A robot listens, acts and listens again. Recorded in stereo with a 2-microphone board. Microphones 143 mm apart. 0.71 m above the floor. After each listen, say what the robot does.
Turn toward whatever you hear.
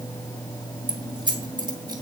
Turn 30° right.
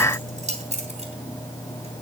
Turn 125° right.
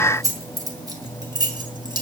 Turn 30° right.
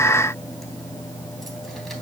Keep listening.
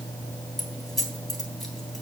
Facing the keys jangling.